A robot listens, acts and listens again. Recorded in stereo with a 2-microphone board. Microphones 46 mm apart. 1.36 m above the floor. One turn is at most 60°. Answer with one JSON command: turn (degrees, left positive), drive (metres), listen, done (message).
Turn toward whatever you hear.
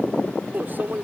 {"turn": -45}
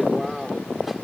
{"done": "Found it: a microwave, straight ahead."}